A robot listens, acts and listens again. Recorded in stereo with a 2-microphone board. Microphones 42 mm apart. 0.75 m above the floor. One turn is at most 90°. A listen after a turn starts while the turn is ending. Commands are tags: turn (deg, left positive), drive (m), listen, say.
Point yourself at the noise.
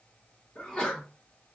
<turn deg="20"/>
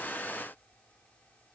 <listen/>
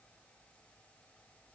<say>I heard a sneeze, but can't make it out now. It was about straight ahead or 140° left.</say>